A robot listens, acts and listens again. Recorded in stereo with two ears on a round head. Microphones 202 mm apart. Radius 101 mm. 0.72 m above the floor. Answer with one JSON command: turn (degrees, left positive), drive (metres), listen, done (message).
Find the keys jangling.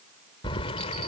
{"turn": 30}
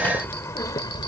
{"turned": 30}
{"turn": 20}
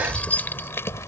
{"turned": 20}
{"turn": 15}
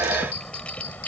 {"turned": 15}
{"turn": 10}
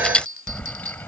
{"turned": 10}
{"turn": 10}
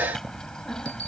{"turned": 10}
{"done": "Found it: keys jangling, straight ahead."}